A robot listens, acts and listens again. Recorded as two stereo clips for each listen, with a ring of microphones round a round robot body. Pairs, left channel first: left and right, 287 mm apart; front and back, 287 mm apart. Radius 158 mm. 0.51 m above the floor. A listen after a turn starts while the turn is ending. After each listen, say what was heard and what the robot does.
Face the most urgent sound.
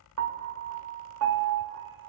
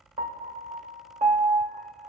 Keep listening.
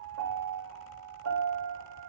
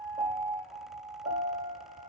Keep listening.
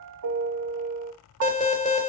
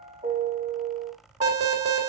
The alarm: 150° left. Turn 150° left.
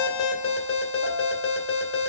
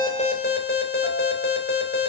The alarm is now 45° left. Turn 45° left.
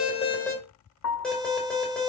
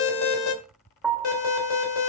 Facing the alarm, 2 to 4 m away.